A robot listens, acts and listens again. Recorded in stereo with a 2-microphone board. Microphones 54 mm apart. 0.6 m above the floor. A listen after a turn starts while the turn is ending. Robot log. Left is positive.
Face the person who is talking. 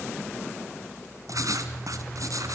cmd idle
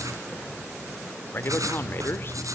note: The man speaking: about 40° left or 140° left.
cmd yaw +40
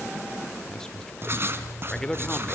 note: So it is at 10° left.
cmd yaw +10
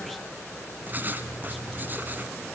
cmd idle
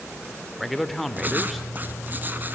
end: Facing the man speaking, 2 to 4 m away.